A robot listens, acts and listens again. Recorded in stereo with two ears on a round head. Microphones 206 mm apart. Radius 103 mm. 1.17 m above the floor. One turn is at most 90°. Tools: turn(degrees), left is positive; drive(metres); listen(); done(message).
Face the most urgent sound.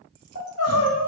turn(degrees=75)
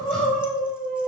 done("Found it: crying, straight ahead.")